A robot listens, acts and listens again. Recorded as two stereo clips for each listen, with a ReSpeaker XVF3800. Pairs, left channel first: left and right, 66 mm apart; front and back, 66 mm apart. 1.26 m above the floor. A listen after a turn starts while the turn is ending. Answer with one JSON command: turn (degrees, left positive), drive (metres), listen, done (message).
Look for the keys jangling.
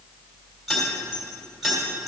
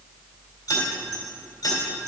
{"done": "Found it: keys jangling, straight ahead, 2 to 4 m away."}